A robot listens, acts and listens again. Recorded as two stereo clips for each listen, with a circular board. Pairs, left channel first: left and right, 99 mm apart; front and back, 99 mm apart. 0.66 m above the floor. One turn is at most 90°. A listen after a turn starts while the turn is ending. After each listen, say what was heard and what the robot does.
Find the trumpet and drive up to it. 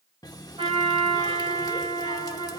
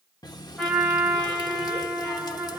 The trumpet: 80° right. Turn 80° right.
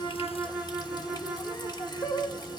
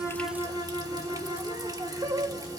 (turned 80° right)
Drive 1.0 m forward.
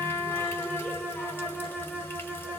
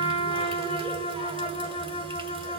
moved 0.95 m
The trumpet is now 10° left. Turn 10° left.
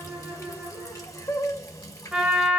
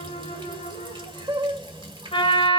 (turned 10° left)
Drive 1.0 m forward.
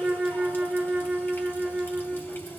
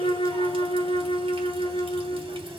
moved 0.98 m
Drive 1.0 m forward.
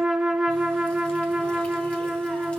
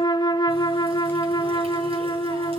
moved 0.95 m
Drive 1.0 m forward.
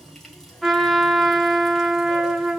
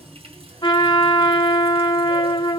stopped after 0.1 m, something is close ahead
Arrived at the trumpet, straight ahead.